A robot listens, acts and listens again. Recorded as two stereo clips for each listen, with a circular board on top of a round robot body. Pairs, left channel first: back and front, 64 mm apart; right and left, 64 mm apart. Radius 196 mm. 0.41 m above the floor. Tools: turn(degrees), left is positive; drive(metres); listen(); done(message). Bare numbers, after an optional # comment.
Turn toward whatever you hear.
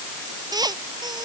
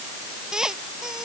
done("Facing the squeak.")